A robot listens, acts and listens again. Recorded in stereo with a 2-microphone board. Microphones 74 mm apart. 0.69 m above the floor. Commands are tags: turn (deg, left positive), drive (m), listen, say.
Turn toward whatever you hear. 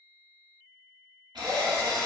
<turn deg="-90"/>
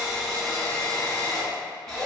<say>Facing the drill.</say>